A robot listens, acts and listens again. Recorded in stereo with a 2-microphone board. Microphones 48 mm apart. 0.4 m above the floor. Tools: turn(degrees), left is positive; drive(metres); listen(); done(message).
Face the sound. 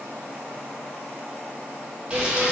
turn(degrees=-20)
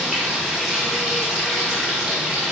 done("Facing the frying.")